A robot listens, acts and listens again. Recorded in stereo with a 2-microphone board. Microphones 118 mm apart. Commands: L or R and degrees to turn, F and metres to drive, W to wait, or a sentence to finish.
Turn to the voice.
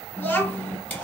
L15
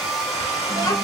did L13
L150
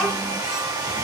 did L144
Found it: a child speaking, straight ahead.